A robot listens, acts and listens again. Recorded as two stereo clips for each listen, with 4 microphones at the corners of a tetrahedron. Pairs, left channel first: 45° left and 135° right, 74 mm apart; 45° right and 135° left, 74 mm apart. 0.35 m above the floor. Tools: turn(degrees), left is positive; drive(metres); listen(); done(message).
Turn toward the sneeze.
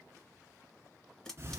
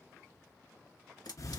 listen()
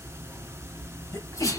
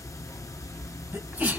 turn(degrees=70)
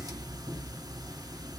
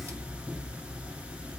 done("Facing where the sneeze came from. I can't hear it now.")